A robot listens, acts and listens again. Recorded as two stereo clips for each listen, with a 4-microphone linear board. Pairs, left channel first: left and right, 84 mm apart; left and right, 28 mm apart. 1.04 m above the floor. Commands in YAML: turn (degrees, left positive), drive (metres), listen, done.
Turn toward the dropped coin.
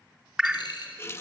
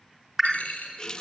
turn: 65
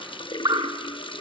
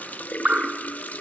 listen: true
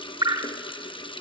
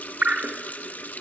done: "I heard a dropped coin, but can't make it out now. It was about straight ahead or 50° left."